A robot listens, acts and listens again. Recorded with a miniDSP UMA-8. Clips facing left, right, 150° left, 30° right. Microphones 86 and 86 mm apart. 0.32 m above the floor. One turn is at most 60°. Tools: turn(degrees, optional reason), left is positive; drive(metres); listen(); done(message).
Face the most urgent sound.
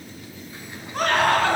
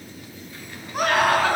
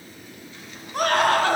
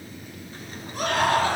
turn(degrees=-60, reason="The scream: 170° right.")
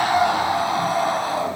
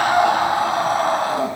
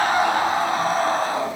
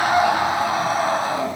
turn(degrees=-60, reason="The scream is now 115° right.")
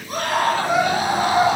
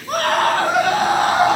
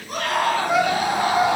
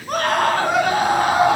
turn(degrees=-60, reason="The scream is now 60° right.")
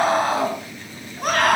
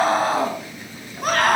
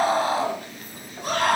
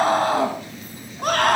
done("Facing the scream, 2 to 4 m away.")